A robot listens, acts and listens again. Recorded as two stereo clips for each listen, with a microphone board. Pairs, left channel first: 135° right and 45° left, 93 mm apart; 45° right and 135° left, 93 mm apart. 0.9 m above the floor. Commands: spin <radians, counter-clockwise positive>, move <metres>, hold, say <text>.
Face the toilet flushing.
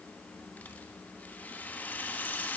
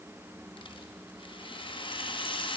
hold
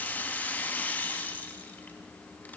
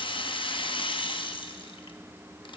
hold
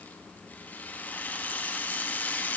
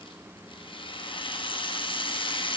say I can't make out a toilet flushing, only a rattle.